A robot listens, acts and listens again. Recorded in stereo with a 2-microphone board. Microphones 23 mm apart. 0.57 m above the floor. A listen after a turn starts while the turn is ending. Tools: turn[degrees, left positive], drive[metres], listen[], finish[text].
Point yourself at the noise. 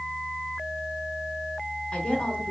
Thought: The woman speaking: about 50° left or 130° left.
Action: turn[50]
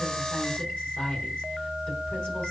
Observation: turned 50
Thought: So it is at 75° left.
Action: turn[75]
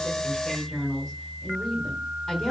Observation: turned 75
Thought: The woman speaking is now 30° left.
Action: turn[30]
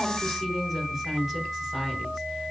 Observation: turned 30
Action: finish[Found it: a woman speaking, straight ahead.]